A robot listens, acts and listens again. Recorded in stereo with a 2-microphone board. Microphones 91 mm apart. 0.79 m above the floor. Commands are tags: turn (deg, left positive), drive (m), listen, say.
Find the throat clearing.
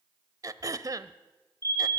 <turn deg="-40"/>
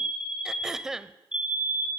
<say>Found it: throat clearing, straight ahead, under 1 m away.</say>